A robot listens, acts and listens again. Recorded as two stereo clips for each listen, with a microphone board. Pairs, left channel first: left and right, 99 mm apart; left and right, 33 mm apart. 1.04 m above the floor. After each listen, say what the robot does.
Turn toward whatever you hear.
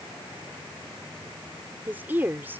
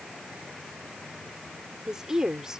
Turn 20° right.
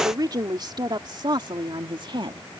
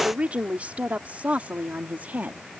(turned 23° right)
Turn 125° right.
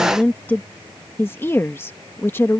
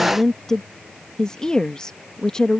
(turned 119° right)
Turn 25° left.
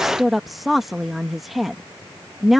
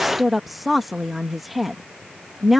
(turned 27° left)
Found it: a woman speaking, straight ahead.